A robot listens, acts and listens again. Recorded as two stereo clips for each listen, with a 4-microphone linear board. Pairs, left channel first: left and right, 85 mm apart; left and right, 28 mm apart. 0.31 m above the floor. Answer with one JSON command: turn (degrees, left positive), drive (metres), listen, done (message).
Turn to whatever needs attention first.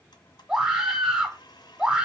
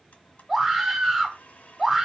{"turn": -30}
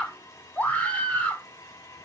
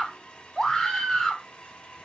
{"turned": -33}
{"turn": 20}
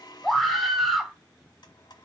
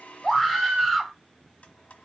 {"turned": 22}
{"done": "Found it: a scream, straight ahead, 1 to 2 m away."}